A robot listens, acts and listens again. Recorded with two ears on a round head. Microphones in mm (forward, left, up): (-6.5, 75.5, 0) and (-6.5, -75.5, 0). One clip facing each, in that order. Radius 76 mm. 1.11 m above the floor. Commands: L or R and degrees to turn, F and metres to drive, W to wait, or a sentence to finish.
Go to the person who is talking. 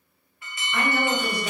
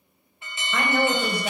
R65
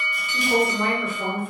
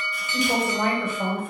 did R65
R45
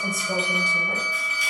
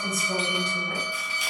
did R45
L10
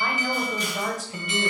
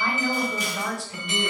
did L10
F1.0
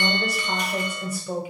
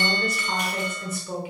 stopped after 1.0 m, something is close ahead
L10
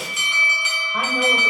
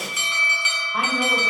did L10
I am next to the woman speaking.